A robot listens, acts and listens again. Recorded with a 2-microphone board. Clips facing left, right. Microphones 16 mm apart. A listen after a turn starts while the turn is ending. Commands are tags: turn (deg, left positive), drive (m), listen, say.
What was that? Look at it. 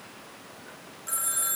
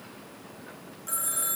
<turn deg="30"/>
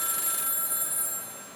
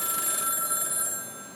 <turn deg="-30"/>
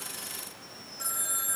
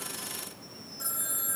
<turn deg="10"/>
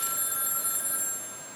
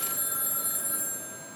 <say>Found it: a phone ringing, straight ahead.</say>